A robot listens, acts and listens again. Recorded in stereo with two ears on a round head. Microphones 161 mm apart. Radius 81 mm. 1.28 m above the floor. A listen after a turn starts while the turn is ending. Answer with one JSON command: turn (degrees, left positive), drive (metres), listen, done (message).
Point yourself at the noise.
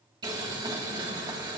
{"turn": -25}
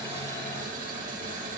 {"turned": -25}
{"turn": -130}
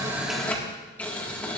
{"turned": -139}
{"turn": 10}
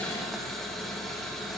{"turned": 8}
{"done": "Found it: boiling, straight ahead."}